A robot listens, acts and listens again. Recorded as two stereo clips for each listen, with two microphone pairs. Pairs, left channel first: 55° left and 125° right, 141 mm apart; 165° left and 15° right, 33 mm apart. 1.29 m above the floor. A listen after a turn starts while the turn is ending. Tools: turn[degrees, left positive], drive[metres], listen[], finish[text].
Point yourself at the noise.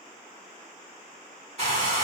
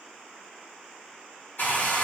Thought: The hair dryer: 170° right.
Action: turn[-170]
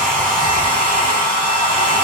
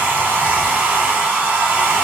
Action: finish[Facing the hair dryer.]